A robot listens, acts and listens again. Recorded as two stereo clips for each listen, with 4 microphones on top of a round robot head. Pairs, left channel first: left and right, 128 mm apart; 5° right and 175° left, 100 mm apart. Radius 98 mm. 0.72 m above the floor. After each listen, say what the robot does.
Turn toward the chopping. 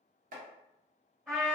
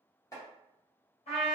Turn 65° right.
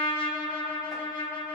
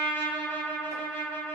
Keep listening.
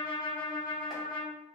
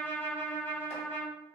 Keep listening.
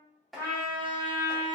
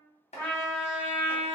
Facing the chopping.